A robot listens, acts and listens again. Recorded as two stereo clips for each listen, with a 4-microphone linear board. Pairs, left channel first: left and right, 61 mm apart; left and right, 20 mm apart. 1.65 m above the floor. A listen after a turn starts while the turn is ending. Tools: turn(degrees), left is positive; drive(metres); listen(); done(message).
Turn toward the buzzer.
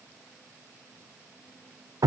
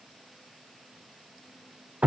listen()
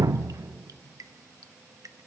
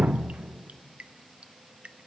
listen()
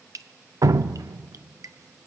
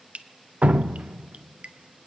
done("I can't make out a buzzer, only dripping.")